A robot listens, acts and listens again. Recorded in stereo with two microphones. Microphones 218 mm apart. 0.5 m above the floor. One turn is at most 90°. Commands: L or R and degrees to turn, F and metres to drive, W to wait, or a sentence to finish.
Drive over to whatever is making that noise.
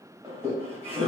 R25
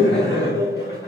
R90
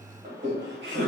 R60
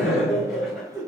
F1.0
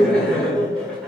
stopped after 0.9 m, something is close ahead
Arrived at the laughter, straight ahead.